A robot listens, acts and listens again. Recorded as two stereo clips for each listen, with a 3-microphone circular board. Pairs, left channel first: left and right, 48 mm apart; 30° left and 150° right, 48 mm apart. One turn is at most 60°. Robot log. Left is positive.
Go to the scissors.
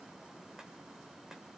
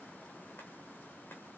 cmd idle
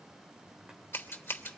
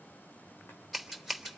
note: The scissors: 120° left.
cmd yaw +60
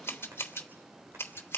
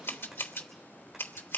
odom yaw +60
note: The scissors is now 60° left.
cmd yaw +60
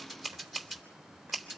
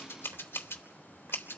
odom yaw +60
cmd fwd 1.0
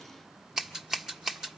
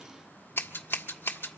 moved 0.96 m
note: The scissors is now 10° right.
cmd yaw -10
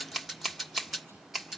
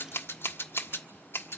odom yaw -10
cmd fwd 1.0
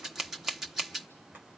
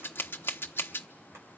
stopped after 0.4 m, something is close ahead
end: Arrived at the scissors, straight ahead.